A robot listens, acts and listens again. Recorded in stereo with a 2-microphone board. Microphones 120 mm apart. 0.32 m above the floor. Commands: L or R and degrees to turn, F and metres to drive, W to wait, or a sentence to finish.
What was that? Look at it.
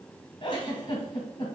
L45
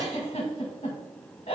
L80
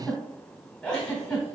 Found it: a giggle, straight ahead.